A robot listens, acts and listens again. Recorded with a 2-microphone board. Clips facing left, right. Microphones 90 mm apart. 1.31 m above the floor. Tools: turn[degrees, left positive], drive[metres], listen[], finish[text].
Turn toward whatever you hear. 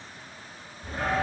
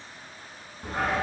Thought: The dog barking: about 70° right or 110° right.
Action: turn[-70]
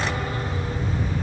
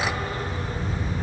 Thought: So it is at 35° right.
Action: turn[-35]
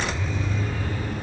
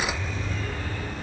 Thought: The dog barking is now 10° left.
Action: turn[10]
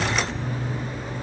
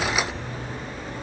Action: finish[Found it: a dog barking, straight ahead, 2 to 4 m away.]